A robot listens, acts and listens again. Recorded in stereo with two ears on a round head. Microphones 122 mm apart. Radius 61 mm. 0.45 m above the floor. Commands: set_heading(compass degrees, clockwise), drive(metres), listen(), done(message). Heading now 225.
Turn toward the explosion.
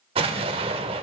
set_heading(270)
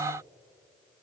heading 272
listen()
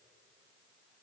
done("I heard an explosion, but can't make it out now. It was about 5° left or 90° right.")